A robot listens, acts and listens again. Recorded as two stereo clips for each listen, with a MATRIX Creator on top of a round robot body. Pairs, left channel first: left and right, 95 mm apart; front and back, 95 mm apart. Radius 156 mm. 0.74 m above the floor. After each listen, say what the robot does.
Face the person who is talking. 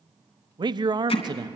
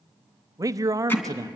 Turn 130° right.
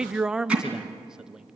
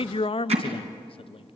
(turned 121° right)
Turn 10° right.
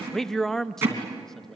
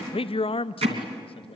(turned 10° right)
Facing the man speaking, under 1 m away.